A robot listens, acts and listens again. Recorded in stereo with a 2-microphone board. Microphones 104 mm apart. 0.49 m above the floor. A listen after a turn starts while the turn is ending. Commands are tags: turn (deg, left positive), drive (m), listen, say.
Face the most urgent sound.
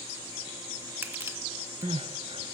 <turn deg="-65"/>
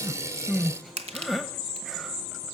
<say>Found it: crying, straight ahead.</say>